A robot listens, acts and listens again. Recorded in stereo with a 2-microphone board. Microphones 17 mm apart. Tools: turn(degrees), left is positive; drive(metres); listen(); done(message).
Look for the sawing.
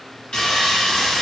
turn(degrees=90)
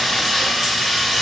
done("Facing the sawing, 1 to 2 m away.")